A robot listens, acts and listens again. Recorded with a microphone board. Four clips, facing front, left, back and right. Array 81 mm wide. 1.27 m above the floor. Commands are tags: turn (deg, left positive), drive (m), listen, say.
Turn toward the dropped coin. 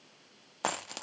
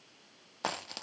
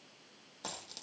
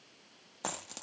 <turn deg="20"/>
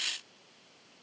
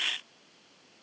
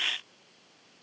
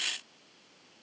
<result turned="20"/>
<say>Facing where the dropped coin came from. I can't hear it now.</say>